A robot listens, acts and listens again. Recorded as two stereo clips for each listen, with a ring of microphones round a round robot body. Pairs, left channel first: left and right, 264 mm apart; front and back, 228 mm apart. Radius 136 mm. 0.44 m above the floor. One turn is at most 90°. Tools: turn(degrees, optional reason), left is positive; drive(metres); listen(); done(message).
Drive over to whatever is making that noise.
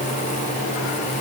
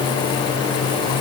listen()
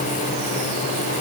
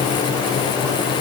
listen()
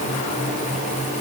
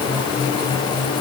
done("I can't make out anything.")